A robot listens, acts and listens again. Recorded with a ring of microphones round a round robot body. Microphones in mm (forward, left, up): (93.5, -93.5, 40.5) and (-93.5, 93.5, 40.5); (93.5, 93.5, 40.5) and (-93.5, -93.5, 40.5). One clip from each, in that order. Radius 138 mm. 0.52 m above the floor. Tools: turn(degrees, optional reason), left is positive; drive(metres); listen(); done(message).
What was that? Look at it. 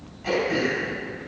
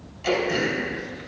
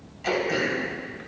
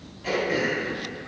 turn(degrees=105, reason="The throat clearing: 105° left.")
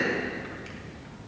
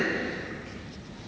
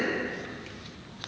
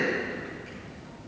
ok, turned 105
done("Facing the throat clearing.")